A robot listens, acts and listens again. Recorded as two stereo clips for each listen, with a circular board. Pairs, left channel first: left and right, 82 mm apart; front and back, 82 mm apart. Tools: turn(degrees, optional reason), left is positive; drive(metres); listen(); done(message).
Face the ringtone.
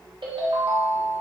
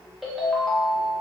turn(degrees=-90, reason="The ringtone: 90° right.")
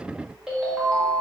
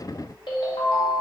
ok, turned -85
turn(degrees=-10, reason="The ringtone is now 10° right.")
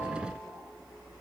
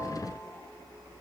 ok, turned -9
listen()
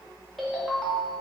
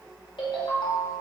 done("Facing the ringtone, under 1 m away.")